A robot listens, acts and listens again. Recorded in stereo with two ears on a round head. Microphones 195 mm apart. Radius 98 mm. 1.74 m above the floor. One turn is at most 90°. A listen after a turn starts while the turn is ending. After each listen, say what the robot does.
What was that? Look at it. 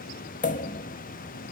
Turn 35° left.
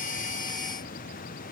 Keep listening.
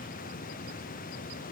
I heard a pop, but can't make it out now. It was about straight ahead or 110° left.